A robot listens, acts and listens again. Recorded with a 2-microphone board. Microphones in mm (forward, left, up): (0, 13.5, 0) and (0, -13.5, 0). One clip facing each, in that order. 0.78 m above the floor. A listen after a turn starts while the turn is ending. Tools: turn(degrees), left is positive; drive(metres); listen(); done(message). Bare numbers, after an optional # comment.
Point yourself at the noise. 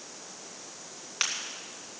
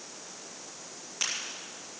# The crack: about 50° left or 130° left.
turn(50)
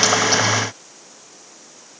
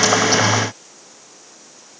listen()
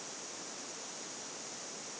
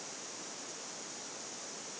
done("I heard a crack, but can't make it out now. It was about straight ahead or 80° left.")